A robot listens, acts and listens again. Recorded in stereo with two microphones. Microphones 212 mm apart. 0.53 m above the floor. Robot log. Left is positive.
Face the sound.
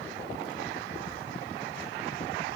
cmd idle
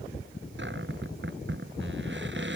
note: The cupboard door: about 55° right or 125° right.
cmd yaw -55
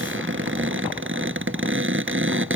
note: So it is at 65° right.
cmd yaw -65
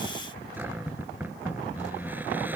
note: The cupboard door is now 10° right.
cmd yaw -10
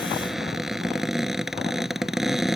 end: Facing the cupboard door.